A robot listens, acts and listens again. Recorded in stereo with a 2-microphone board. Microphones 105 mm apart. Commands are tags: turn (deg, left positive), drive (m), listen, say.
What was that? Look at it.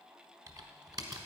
<turn deg="-40"/>
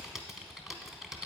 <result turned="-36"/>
<say>Facing the typing on a keyboard, 1 to 2 m away.</say>